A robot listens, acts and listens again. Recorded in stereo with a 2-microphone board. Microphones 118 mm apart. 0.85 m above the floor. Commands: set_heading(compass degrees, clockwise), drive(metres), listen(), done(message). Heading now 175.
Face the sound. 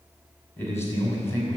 set_heading(155)
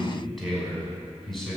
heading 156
set_heading(126)
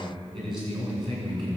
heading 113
set_heading(153)
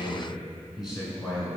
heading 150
done("Found it: a man speaking, straight ahead, over 4 m away.")